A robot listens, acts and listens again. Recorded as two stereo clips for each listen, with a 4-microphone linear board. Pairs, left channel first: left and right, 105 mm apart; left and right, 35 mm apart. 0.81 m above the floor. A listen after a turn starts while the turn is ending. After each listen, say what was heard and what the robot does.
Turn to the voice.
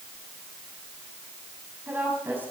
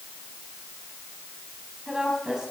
The woman speaking: about 15° right or 165° right. Turn 15° right.
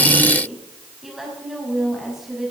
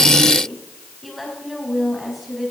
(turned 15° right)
Facing the woman speaking, over 4 m away.